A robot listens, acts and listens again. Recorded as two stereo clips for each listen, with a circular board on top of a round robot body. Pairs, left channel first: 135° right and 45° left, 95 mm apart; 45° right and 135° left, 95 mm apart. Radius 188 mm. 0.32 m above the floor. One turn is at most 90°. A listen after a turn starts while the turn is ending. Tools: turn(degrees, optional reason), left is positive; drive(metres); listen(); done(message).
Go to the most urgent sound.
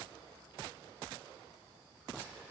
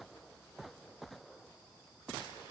listen()
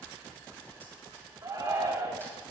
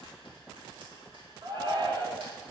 turn(degrees=90, reason="The shout: 100° left.")
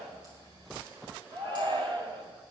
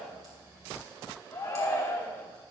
turn(degrees=15, reason="The shout is now 15° left.")
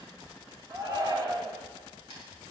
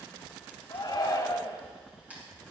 drive(metres=1.0)
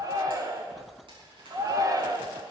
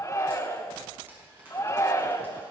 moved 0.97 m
drive(metres=1.0)
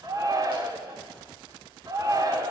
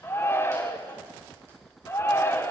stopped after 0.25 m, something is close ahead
turn(degrees=10, reason="The shout is now 10° left.")
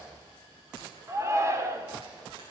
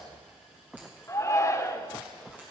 done("I am next to the shout.")